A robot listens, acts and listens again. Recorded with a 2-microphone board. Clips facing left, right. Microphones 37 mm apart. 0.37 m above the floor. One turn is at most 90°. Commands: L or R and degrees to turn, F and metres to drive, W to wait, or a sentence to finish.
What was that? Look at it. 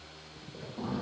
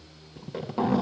R90
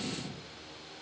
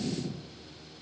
Facing the zipper.